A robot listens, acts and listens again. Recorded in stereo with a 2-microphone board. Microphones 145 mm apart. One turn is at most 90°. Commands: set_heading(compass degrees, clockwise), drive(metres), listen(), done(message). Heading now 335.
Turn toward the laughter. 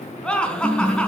set_heading(305)
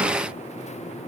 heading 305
listen()
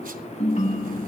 listen()
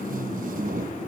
done("I heard laughter, but can't make it out now. It was about 25° right or 145° left.")